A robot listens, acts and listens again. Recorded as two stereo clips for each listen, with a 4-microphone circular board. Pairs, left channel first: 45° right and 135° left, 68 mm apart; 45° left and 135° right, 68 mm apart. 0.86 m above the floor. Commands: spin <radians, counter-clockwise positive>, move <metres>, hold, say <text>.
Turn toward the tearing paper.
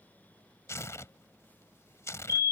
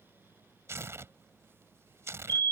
spin -1.57
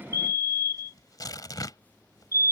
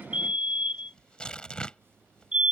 spin -0.52
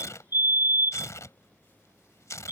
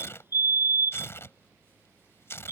say Facing the tearing paper.